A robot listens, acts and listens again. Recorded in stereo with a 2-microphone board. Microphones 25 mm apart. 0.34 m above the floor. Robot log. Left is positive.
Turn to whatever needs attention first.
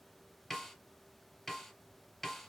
cmd idle
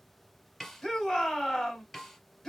cmd yaw +30
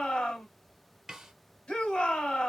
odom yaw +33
note: So it is at 135° left.
cmd yaw +135
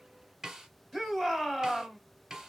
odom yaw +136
end: Facing the shout, 1 to 2 m away.